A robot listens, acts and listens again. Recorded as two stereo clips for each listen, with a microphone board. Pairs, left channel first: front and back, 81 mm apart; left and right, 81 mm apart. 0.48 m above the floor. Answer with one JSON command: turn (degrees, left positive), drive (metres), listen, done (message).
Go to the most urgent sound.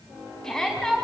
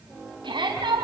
{"turn": -80}
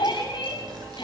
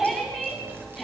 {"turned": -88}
{"drive": 1.0}
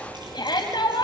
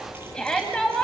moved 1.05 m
{"turn": 10}
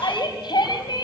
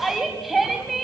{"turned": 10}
{"drive": 1.0}
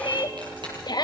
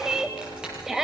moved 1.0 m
{"drive": 1.0}
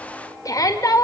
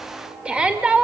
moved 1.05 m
{"turn": -15}
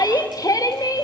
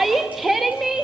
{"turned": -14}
{"drive": 1.0}
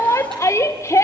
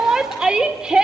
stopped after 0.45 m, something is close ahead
{"turn": -15}
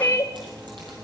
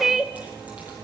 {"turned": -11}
{"done": "I am next to the shout."}